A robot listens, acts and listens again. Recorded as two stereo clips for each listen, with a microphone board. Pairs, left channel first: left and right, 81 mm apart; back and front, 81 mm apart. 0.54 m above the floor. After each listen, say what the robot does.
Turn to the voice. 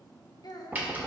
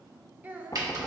Turn 65° left.
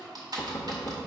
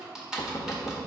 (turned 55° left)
Turn 10° left.
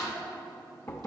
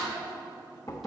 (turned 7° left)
Keep listening.
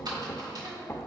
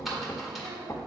I heard a child speaking from this way, but can't make it out now.